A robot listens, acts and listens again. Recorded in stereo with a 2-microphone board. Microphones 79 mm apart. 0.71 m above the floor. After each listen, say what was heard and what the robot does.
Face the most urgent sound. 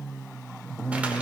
Keep listening.
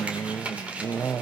Keep listening.
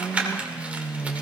I can't make out anything urgent, only crumpling.